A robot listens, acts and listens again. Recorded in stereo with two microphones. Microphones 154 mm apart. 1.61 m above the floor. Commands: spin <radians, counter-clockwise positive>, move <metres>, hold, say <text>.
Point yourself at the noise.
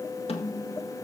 spin 0.70
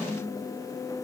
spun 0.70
spin 0.17
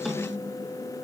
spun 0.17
say Facing the snare drum, 1 to 2 m away.